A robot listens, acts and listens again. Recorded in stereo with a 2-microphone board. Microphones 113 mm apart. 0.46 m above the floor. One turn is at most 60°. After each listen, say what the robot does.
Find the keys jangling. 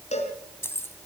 Turn 20° left.
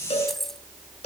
Found it: keys jangling, straight ahead, 2 to 4 m away.